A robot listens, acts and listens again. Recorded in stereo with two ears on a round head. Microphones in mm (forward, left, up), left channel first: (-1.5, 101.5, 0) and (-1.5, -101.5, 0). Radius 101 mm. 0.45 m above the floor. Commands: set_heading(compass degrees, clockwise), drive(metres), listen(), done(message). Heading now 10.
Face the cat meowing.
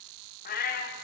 set_heading(330)
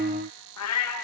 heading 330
set_heading(235)
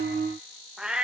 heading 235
done("Found it: a cat meowing, straight ahead, over 4 m away.")